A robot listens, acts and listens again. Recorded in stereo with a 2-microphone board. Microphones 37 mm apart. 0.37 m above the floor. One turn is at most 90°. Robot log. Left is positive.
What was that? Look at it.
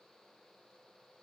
cmd idle
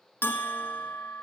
cmd yaw +90
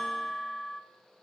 note: So it is at 15° left.
cmd yaw +15
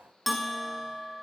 end: Found it: a bell, straight ahead, under 1 m away.